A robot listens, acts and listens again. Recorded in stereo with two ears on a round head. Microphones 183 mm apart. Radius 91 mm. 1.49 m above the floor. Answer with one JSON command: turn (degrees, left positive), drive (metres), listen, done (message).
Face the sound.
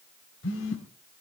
{"turn": 65}
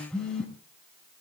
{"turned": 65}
{"done": "Facing the phone buzzing."}